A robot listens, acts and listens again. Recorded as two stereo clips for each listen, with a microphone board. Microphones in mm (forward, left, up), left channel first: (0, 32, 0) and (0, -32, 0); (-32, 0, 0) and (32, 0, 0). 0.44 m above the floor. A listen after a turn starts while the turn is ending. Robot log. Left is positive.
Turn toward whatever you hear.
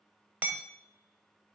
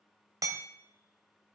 note: The hammering: 25° right.
cmd yaw -25
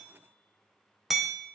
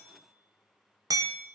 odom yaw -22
end: Found it: hammering, straight ahead.